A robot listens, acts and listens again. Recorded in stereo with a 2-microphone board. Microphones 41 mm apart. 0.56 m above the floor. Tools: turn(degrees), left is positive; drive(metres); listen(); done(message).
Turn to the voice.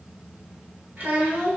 turn(degrees=-45)
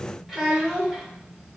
turn(degrees=-10)
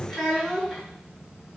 done("Found it: a child speaking, straight ahead, 1 to 2 m away.")